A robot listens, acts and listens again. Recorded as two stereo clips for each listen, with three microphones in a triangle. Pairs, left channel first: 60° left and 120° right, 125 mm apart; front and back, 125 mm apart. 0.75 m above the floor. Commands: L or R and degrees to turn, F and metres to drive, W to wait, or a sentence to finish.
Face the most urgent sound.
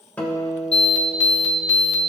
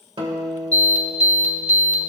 R20
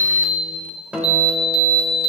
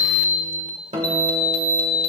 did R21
Facing the alarm.